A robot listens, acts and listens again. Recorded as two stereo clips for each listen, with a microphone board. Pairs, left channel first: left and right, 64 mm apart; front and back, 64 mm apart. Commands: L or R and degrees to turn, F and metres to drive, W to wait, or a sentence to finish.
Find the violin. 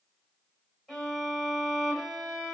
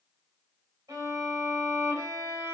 R175
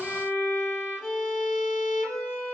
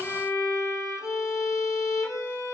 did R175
L30
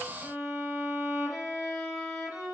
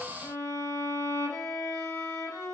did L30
Found it: a violin, straight ahead.